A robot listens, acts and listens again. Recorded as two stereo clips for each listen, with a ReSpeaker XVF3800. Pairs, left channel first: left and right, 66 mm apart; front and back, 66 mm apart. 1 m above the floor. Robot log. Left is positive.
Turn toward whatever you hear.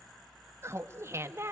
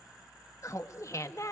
note: The laughter: 40° right.
cmd yaw -40
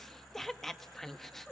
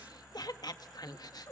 end: Facing the laughter.